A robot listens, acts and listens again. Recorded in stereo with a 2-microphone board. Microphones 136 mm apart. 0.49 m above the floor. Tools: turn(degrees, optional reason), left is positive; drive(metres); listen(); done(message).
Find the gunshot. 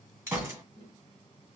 turn(degrees=-20, reason="The gunshot: about 20° right or 160° right.")
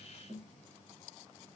listen()
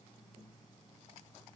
done("I heard a gunshot, but can't make it out now. It was about straight ahead or 140° right.")